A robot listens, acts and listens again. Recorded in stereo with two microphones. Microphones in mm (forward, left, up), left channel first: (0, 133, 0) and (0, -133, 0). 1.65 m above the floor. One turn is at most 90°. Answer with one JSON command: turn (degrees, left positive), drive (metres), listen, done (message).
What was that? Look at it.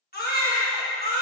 {"turn": 35}
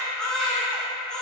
{"done": "Facing the baby crying."}